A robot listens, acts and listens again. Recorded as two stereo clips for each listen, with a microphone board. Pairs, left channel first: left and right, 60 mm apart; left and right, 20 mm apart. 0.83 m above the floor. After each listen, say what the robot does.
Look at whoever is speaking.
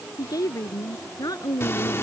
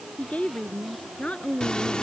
Turn 90° left.
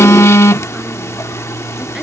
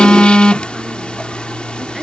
Keep listening.
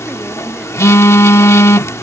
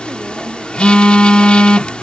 Keep listening.
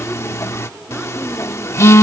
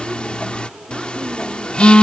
I heard a woman speaking from this way, but can't make it out now.